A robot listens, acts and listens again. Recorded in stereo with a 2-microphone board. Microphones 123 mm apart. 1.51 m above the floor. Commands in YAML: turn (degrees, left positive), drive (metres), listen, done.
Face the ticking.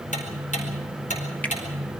turn: 90
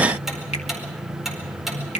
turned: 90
done: "Facing the ticking, over 4 m away."